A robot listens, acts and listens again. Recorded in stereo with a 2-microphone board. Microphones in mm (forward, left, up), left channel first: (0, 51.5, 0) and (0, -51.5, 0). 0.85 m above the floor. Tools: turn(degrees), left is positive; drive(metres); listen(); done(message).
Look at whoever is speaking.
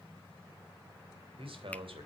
turn(degrees=-65)
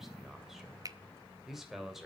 done("Found it: a man speaking, straight ahead.")